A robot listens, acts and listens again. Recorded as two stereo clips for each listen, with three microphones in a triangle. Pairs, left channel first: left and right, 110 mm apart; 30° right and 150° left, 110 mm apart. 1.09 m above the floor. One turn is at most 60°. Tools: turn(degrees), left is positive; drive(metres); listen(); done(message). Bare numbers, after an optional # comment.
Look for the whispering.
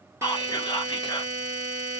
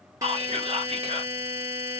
# The whispering: 135° left.
turn(60)
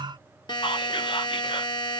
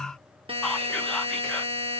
# The whispering is now 55° left.
turn(55)
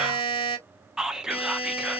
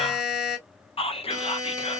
done("Facing the whispering.")